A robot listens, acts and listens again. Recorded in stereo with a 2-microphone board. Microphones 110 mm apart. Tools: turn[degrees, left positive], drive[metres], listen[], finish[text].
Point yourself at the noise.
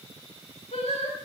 Thought: The singing: about 65° left or 115° left.
Action: turn[65]
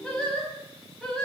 Action: finish[Facing the singing, over 4 m away.]